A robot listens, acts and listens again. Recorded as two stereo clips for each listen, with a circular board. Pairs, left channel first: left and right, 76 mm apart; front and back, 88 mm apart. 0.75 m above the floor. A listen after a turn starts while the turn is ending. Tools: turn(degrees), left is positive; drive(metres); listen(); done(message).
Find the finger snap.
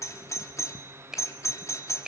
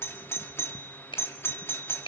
turn(degrees=-10)
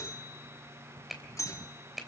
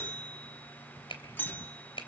done("Found it: a finger snap, straight ahead, 2 to 4 m away.")